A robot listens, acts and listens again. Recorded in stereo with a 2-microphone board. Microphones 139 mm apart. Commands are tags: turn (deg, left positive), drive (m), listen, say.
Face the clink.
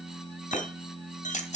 <turn deg="65"/>
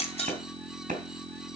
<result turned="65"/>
<listen/>
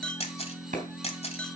<turn deg="10"/>
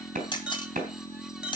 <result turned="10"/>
<say>Found it: a clink, straight ahead.</say>